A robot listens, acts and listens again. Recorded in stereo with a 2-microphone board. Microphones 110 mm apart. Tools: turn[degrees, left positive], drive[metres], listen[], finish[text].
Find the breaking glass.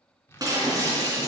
Thought: The breaking glass: about 35° right or 145° right.
Action: turn[-35]
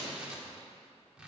Action: listen[]
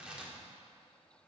Action: finish[I heard breaking glass, but can't make it out now. It was about straight ahead or 110° right.]